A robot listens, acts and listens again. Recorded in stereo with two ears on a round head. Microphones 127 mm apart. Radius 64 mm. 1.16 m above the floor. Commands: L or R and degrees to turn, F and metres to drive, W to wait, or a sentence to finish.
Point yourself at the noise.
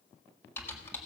L15
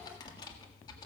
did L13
L150
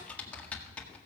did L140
L10
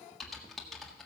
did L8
Facing the typing on a keyboard.